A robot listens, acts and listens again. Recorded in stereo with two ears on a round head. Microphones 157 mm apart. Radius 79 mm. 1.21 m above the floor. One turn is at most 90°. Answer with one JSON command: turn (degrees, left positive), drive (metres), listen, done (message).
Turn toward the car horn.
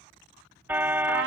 {"turn": -30}
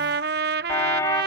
{"turn": 20}
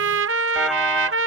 {"listen": true}
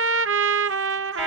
{"listen": true}
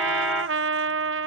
{"done": "Facing where the car horn came from. I can't hear it now."}